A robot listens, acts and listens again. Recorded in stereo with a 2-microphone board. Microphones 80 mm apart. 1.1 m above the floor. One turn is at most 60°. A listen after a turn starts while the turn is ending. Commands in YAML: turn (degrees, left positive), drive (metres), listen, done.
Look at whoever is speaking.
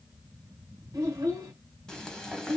turn: -45
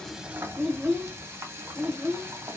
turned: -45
done: "Facing the child speaking, 1 to 2 m away."